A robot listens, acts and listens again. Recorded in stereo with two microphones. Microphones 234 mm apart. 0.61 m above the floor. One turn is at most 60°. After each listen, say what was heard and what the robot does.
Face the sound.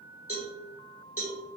The cowbell: about 70° left or 110° left. Turn 60° left.
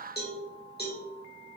So it is at 45° left. Turn 45° left.
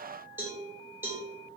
The cowbell is now 10° right. Turn 10° right.
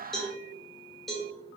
Found it: a cowbell, straight ahead, 1 to 2 m away.